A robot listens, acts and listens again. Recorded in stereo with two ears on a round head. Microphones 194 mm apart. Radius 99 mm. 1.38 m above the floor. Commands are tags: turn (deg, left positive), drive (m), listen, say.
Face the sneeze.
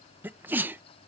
<turn deg="-30"/>
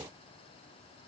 <listen/>
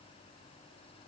<say>I heard a sneeze, but can't make it out now. It was about 20° left or 140° right.</say>